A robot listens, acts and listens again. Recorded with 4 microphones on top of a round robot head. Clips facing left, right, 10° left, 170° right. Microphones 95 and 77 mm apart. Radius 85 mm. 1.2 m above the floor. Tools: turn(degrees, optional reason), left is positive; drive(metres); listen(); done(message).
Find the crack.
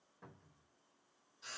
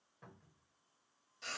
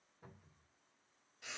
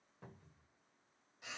listen()
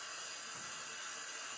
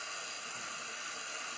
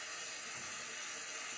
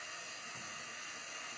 listen()
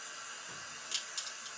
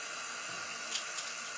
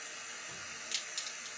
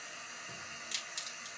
turn(degrees=130, reason="The crack: 130° left.")
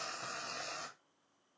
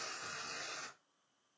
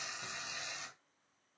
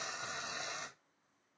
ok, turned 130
done("I heard a crack from this way, but can't make it out now.")